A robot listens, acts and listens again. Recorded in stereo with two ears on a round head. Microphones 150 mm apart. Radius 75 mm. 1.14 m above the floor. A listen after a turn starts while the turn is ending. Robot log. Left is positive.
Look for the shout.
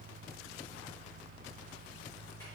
cmd idle
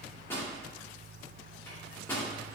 cmd idle
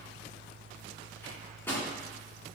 end: I can't make out a shout, only a microwave.